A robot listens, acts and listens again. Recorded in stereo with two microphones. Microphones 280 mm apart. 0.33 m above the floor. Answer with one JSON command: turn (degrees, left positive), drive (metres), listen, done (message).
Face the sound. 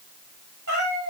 {"turn": -90}
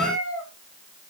{"done": "Facing the cat meowing."}